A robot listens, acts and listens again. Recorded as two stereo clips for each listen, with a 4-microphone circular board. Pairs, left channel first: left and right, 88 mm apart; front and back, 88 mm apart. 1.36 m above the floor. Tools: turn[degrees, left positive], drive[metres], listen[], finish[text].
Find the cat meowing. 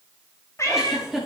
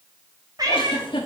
Thought: The cat meowing: 140° left.
Action: turn[140]
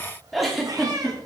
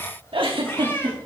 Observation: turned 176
Thought: The cat meowing is now 60° right.
Action: turn[-60]
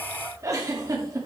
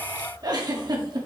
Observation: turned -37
Thought: Nothing new. It was at 25° right.
Action: turn[-25]
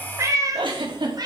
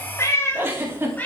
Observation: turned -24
Thought: The cat meowing is now 65° right.
Action: turn[-65]
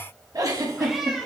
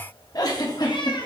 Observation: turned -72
Action: finish[Facing the cat meowing.]